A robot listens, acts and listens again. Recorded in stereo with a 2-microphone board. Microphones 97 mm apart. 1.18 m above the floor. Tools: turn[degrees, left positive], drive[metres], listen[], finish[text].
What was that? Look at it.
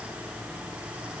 Action: listen[]
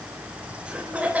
Thought: The laughter: about 15° right or 165° right.
Action: turn[-15]
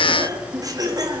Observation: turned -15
Thought: The laughter: about 40° right or 140° right.
Action: turn[-40]
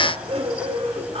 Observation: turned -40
Thought: So it is at 100° right.
Action: turn[-100]
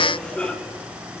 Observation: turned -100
Thought: The laughter is now 10° left.
Action: turn[10]
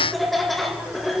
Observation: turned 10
Action: finish[Found it: laughter, straight ahead, 2 to 4 m away.]